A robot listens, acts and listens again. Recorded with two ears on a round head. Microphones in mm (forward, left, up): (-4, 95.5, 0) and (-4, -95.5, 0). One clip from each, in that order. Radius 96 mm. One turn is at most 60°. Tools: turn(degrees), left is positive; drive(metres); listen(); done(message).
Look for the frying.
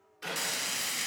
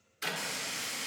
turn(degrees=30)
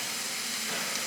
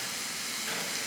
done("Facing the frying, 1 to 2 m away.")